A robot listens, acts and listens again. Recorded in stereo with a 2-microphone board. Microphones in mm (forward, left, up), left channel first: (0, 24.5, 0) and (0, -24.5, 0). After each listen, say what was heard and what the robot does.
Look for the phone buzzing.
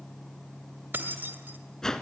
Keep listening.
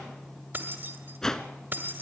Keep listening.
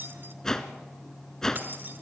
I can't make out a phone buzzing, only a whoosh and keys jangling.